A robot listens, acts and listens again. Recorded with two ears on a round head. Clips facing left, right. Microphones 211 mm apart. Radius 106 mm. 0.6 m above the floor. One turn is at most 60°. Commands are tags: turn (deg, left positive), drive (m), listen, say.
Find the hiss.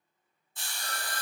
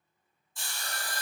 <turn deg="20"/>
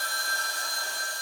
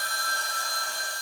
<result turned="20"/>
<listen/>
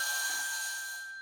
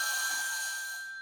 <say>Found it: a hiss, straight ahead, 1 to 2 m away.</say>